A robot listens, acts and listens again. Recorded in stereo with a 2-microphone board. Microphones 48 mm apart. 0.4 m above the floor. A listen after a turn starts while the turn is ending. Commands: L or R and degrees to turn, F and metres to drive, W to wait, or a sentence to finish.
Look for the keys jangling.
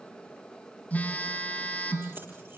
W
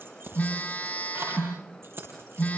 R60
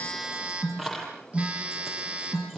Found it: keys jangling, straight ahead.